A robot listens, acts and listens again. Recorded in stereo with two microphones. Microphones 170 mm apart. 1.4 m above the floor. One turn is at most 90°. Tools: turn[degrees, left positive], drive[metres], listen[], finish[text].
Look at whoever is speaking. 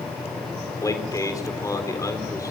Thought: The man speaking: about 20° left or 160° left.
Action: turn[20]
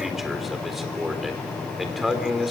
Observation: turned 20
Action: finish[Facing the man speaking.]